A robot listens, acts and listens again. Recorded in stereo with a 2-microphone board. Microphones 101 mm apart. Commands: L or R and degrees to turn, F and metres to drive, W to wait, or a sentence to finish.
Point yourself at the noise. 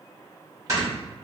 R35
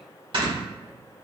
R105
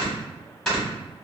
Found it: snoring, straight ahead, 1 to 2 m away.